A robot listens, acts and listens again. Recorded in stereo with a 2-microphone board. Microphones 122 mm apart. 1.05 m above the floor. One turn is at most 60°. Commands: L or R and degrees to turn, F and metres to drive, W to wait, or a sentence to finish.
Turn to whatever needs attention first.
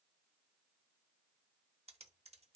W
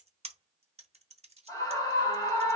L30
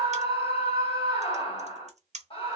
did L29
L60
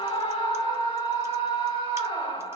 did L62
L50
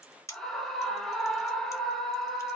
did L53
Found it: a scream, straight ahead.